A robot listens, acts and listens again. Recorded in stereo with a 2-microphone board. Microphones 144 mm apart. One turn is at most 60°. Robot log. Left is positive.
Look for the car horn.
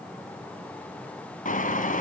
note: The car horn: about 65° left or 115° left.
cmd yaw +60
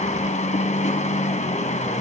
note: So it is at 55° left.
cmd yaw +55
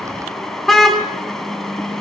end: Facing the car horn.